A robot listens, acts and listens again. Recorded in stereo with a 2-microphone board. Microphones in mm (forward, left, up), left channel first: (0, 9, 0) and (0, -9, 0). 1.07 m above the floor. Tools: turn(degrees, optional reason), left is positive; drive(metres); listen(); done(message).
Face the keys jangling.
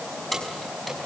turn(degrees=30)
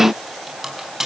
turn(degrees=-25, reason="So it is at 25° right.")
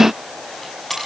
turn(degrees=10, reason="The keys jangling is now 10° left.")
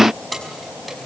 done("Facing the keys jangling.")